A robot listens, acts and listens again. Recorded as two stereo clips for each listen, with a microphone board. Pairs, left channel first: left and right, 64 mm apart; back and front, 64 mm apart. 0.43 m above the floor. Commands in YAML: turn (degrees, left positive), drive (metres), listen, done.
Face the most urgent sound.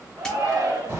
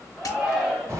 turn: -85
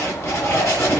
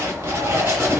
listen: true
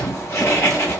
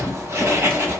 listen: true
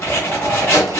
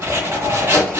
done: "I heard a shout from this way, but can't make it out now."